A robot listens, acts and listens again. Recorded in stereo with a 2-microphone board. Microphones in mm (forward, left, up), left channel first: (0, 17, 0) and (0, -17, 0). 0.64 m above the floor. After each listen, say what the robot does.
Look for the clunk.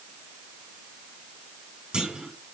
Turn 25° right.
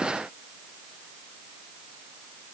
Keep listening.
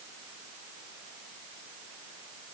I heard a clunk, but can't make it out now. It was about straight ahead or 130° right.